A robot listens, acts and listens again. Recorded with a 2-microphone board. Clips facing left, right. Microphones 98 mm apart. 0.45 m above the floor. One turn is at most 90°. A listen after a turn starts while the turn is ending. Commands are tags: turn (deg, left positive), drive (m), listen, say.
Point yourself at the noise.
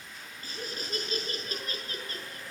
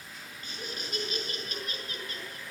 <turn deg="35"/>
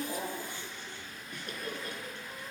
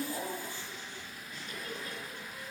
<turn deg="90"/>
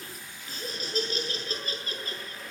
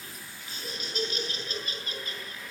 <turn deg="40"/>
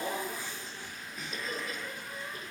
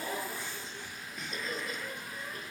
<say>Found it: laughter, straight ahead.</say>